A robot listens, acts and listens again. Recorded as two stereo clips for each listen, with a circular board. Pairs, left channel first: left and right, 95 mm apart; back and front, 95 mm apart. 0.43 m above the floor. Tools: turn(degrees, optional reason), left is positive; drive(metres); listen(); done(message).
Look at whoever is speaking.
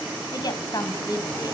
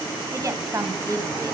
turn(degrees=50, reason="The woman speaking: 50° left.")
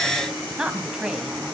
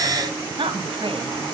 turn(degrees=-10, reason="The woman speaking is now 10° right.")
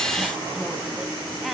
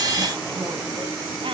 done("Facing the woman speaking.")